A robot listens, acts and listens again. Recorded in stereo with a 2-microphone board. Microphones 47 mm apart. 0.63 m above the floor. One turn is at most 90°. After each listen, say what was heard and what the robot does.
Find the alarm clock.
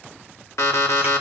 The alarm clock: about 75° left or 105° left. Turn 75° left.
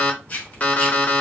So it is at 30° left. Turn 30° left.
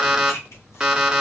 The alarm clock is now 15° right. Turn 15° right.
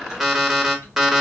Facing the alarm clock.